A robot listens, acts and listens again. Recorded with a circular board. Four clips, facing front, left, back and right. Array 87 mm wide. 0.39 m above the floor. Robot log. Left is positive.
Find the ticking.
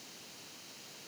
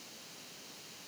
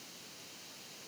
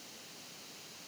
cmd idle
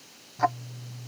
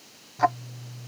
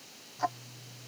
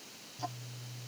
note: The ticking: 65° left.
cmd yaw +65
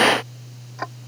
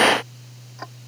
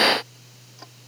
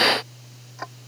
end: Facing the ticking.